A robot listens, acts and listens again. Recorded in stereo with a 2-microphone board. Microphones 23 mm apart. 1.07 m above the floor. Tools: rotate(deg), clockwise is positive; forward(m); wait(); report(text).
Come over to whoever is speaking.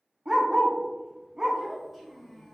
rotate(-30)
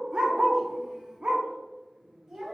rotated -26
rotate(25)
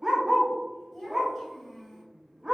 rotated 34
rotate(-10)
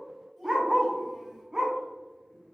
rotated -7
wait()
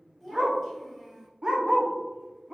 forward(1.0)
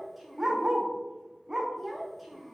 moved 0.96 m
forward(1.0)
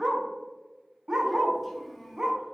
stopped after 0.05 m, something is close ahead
rotate(-10)
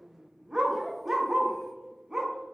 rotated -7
report("Arrived at the child speaking, straight ahead.")